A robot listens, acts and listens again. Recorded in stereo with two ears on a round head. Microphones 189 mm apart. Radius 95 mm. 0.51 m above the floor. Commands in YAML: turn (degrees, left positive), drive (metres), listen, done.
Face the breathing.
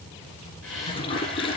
turn: 70
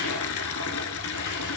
listen: true
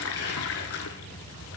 listen: true
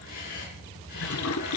turn: 45
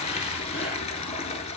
listen: true
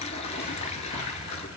listen: true
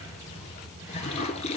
done: "I heard breathing from this way, but can't make it out now."